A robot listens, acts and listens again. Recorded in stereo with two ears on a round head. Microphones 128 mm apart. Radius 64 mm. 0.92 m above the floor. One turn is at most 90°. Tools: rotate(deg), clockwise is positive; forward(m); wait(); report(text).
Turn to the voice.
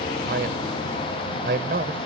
rotate(90)
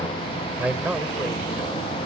rotate(10)
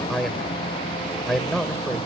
report("Facing the man speaking.")